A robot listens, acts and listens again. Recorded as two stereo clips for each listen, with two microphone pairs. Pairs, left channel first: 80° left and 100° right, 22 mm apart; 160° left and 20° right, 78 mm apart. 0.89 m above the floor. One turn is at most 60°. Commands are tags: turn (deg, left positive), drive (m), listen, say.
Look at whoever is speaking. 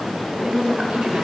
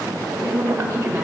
<turn deg="-60"/>
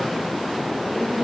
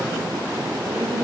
<say>Found it: a woman speaking, straight ahead, 2 to 4 m away.</say>